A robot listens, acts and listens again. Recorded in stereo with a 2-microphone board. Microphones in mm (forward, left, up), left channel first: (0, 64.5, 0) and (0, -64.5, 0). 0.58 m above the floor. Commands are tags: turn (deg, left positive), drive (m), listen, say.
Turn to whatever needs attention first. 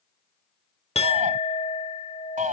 <turn deg="-90"/>
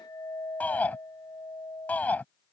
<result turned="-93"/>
<turn deg="10"/>
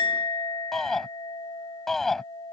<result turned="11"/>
<say>Found it: a shout, straight ahead.</say>